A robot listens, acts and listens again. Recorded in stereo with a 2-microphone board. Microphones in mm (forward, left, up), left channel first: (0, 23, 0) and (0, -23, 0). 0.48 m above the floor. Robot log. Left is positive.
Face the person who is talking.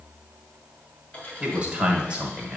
note: The man speaking: about 20° right or 160° right.
cmd yaw -20
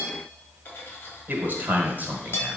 note: So it is at 140° right.
cmd yaw -140
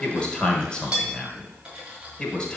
note: The man speaking is now 20° left.
cmd yaw +20
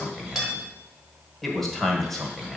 end: Found it: a man speaking, straight ahead.